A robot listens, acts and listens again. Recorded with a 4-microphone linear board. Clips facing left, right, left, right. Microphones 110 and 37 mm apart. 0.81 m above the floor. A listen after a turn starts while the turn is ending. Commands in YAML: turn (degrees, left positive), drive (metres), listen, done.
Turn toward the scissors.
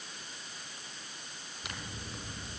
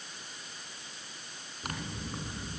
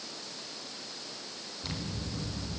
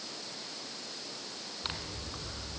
turn: -45
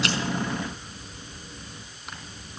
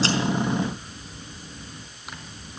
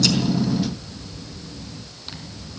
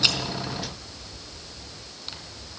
done: "Found it: scissors, straight ahead, over 4 m away."